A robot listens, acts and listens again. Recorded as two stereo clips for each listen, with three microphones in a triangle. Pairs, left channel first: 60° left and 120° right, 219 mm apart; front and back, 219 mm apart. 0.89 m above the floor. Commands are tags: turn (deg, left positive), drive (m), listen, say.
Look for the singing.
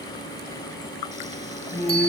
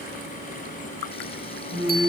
<turn deg="-175"/>
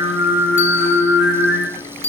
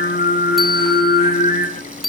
<turn deg="45"/>
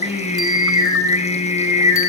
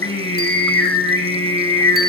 <say>Found it: singing, straight ahead, over 4 m away.</say>